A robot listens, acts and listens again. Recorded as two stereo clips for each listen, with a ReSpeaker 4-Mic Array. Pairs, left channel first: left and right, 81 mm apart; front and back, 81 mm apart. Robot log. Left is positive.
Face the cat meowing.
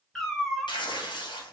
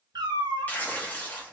note: The cat meowing: 175° left.
cmd yaw +175
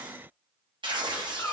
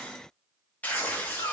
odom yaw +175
note: The cat meowing is now 35° left.
cmd yaw +35
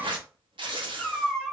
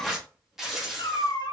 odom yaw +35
note: The cat meowing is now 10° left.
cmd yaw +10
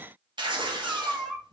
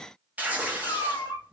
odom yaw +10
end: Facing the cat meowing.